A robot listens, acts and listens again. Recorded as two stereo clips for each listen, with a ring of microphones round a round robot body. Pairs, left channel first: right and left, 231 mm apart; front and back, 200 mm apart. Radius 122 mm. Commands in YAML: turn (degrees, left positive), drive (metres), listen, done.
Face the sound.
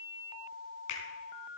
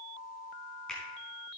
turn: -85
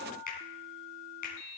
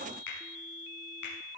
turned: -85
turn: -35
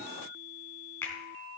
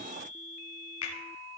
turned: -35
turn: -10
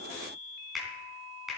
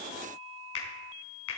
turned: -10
done: "Facing the finger snap."